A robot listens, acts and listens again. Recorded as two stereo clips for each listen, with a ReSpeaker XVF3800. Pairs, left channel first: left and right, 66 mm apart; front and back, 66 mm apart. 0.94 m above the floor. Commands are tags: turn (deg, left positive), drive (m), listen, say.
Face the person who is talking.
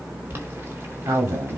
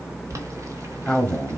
<turn deg="-80"/>
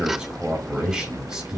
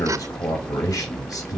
<turn deg="-15"/>
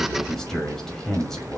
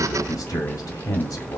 <say>Found it: a man speaking, straight ahead, 2 to 4 m away.</say>